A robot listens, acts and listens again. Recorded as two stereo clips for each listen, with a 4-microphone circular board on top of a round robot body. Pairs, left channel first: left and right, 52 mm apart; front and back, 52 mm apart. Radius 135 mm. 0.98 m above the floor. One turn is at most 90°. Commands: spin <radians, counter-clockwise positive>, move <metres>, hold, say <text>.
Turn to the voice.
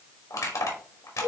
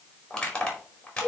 hold
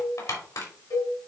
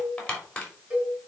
hold
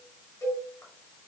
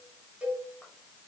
say I can't make out anyone speaking to turn to.